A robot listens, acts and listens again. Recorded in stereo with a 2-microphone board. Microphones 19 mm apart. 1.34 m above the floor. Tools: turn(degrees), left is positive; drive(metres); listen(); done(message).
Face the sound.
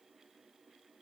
listen()
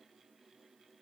listen()
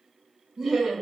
turn(degrees=-35)
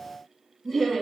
done("Found it: laughter, straight ahead.")